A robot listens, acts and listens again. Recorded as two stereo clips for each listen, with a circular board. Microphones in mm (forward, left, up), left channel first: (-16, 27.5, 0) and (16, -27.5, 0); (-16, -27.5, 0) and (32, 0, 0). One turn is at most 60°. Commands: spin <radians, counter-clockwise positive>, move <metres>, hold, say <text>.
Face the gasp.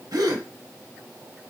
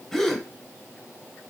spin -1.05
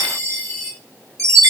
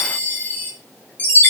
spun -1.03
say Facing where the gasp came from. I can't hear it now.